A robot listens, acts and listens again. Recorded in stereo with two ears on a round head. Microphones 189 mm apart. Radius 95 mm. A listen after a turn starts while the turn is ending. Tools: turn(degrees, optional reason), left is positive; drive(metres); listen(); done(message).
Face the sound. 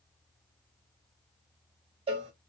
turn(degrees=-30, reason="The cowbell: about 30° right or 150° right.")
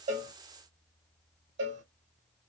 turn(degrees=-120, reason="So it is at 120° right.")
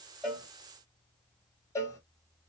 turn(degrees=15, reason="The cowbell is now 15° left.")
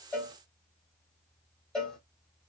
done("Facing the cowbell, 2 to 4 m away.")